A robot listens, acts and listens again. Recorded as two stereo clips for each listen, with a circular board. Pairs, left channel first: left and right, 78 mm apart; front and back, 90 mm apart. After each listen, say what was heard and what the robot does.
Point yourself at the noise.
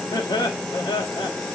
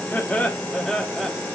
The laughter: 80° left. Turn 80° left.
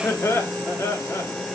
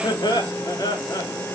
The laughter is now 45° left. Turn 45° left.
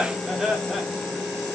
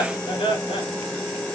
Found it: laughter, straight ahead, 2 to 4 m away.